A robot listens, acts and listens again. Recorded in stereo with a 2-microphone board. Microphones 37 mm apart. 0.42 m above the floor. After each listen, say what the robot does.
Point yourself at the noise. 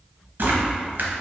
Turn 75° right.
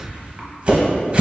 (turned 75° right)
Turn 30° right.
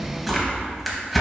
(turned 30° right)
Found it: tearing paper, straight ahead.